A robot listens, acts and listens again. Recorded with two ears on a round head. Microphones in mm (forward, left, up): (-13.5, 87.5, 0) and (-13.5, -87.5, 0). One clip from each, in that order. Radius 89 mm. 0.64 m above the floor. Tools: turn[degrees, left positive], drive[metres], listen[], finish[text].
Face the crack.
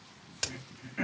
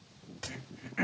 Thought: The crack: about 65° left or 115° left.
Action: turn[65]
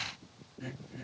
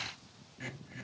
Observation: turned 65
Action: listen[]
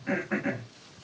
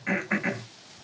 Action: finish[I heard a crack, but can't make it out now. It was about straight ahead or 50° left.]